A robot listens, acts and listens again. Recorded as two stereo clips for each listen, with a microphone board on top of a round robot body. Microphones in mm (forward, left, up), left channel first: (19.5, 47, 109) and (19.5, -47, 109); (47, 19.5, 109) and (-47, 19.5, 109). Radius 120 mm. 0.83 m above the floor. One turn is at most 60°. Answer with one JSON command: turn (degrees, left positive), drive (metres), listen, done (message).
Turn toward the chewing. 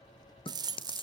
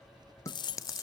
{"turn": 60}
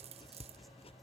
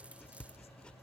{"listen": true}
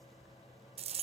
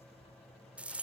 {"listen": true}
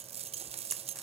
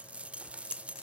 {"done": "I heard chewing from this way, but can't make it out now."}